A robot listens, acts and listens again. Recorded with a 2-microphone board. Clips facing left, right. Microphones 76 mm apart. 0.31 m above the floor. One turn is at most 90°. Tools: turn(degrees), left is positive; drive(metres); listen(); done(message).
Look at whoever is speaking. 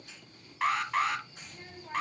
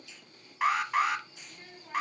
turn(degrees=20)
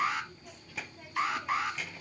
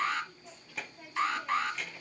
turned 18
done("Facing the child speaking, under 1 m away.")